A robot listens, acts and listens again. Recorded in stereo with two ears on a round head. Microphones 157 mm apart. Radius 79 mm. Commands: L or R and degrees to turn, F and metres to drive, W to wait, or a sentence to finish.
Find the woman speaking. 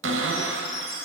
W
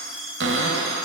W
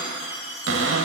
I can't make out a woman speaking, only a cupboard door and a chime.